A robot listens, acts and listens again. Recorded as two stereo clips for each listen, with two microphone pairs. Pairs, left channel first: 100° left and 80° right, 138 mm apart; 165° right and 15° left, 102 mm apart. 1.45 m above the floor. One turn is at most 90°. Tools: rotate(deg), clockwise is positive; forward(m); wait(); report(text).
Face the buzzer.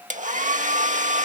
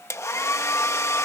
wait()
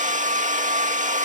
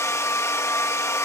wait()
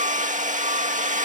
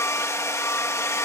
report("I can't make out a buzzer, only a hair dryer.")